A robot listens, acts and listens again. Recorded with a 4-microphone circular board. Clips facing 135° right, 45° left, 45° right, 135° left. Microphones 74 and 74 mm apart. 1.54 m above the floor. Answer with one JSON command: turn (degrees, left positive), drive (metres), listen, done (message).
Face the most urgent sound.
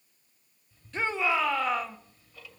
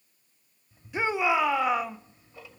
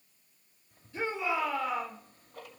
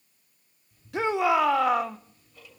{"turn": 125}
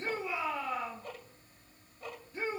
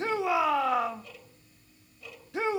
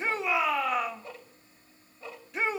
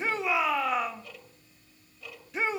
{"turn": 45}
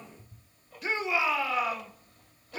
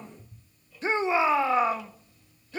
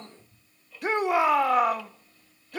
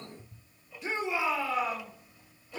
{"turn": -15}
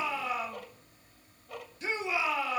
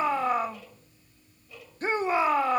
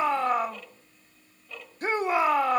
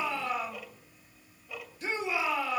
{"done": "Facing the shout, 1 to 2 m away."}